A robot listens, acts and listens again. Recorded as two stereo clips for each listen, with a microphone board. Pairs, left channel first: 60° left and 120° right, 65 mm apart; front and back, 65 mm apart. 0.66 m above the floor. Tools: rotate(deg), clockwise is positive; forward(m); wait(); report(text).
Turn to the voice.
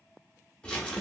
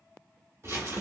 wait()
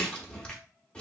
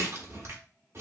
wait()
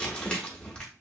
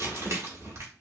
report("I can't make out anyone speaking, only crumpling.")